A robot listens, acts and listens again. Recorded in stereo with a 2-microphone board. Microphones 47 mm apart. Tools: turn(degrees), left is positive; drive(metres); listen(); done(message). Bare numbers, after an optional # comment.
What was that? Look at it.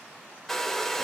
turn(30)
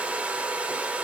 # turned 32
# So it is at 25° right.
turn(-25)
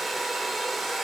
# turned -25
done("Facing the hair dryer.")